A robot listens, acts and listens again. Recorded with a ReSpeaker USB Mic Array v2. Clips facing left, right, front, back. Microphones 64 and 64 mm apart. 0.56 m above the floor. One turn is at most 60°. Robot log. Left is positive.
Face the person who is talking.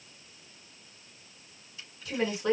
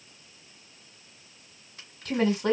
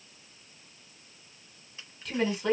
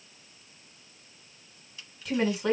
note: The woman speaking: 95° right.
cmd yaw -60
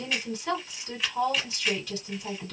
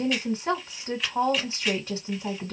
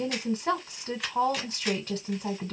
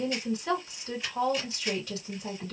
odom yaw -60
note: The woman speaking is now 40° right.
cmd yaw -40
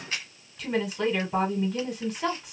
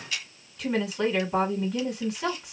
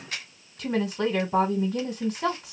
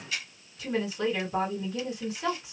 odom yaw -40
end: Facing the woman speaking, 1 to 2 m away.